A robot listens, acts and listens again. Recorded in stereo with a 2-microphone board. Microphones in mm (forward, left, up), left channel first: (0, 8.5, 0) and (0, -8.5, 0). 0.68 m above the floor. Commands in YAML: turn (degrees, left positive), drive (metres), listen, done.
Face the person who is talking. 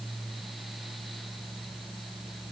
listen: true
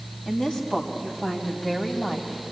turn: 65
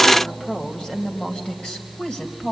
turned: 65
turn: 70
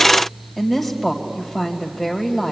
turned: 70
done: "Found it: a woman speaking, straight ahead."